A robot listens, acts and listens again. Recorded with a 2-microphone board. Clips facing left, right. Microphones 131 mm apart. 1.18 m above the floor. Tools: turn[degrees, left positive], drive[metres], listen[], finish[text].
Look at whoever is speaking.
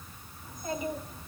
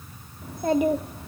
Thought: The child speaking: about 70° right or 110° right.
Action: turn[-70]
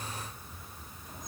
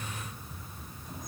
Action: listen[]
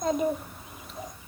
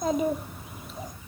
Action: finish[Facing the child speaking.]